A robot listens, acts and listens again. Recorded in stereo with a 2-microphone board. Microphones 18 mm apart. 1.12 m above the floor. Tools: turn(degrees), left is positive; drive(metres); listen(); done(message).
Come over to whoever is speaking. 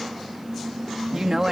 turn(degrees=-30)
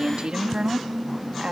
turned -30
turn(degrees=-120)
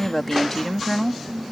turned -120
turn(degrees=20)
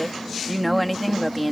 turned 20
drive(metres=1.0)
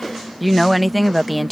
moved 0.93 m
drive(metres=1.0)
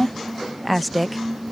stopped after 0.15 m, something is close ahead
done("I am next to the woman speaking.")